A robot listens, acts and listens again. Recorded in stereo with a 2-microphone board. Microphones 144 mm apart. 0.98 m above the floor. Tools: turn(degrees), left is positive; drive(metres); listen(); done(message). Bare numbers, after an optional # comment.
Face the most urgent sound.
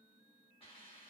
listen()
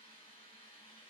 listen()
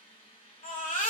turn(90)
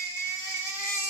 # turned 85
# So it is at 15° left.
turn(15)
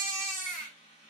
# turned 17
done("Found it: a baby crying, straight ahead, 1 to 2 m away.")